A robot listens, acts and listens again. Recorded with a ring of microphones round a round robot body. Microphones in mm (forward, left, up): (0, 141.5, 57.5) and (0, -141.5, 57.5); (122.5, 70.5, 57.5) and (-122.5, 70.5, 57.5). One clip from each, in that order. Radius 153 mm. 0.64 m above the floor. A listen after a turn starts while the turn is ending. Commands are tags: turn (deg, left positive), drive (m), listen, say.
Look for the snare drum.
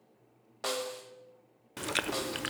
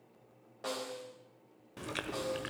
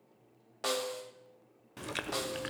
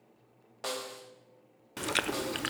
<turn deg="70"/>
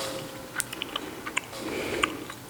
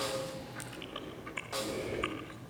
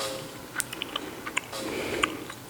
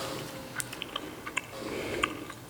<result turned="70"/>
<listen/>
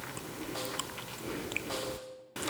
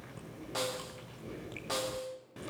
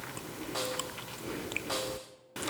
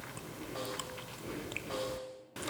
<turn deg="-10"/>
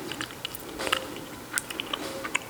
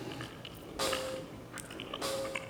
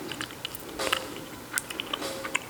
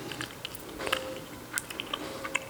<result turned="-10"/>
<listen/>
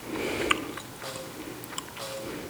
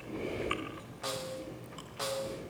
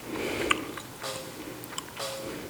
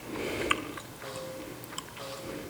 <say>Found it: a snare drum, straight ahead.</say>